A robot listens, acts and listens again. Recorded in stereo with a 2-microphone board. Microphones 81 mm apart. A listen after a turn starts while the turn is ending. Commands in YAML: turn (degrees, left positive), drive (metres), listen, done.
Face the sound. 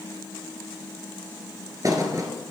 turn: -45
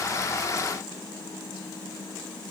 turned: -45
listen: true
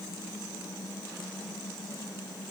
done: "I heard a thud, but can't make it out now. It was about straight ahead or 90° right."